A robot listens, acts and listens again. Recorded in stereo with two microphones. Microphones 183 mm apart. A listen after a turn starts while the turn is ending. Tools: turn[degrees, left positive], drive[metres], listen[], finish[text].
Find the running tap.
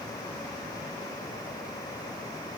Action: listen[]
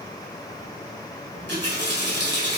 Action: turn[-90]
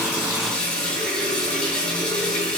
Action: finish[Facing the running tap, 2 to 4 m away.]